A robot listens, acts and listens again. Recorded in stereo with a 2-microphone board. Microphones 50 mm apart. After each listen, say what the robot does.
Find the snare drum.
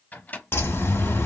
Keep listening.
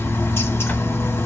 Keep listening.
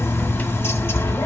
I can't make out a snare drum to turn to.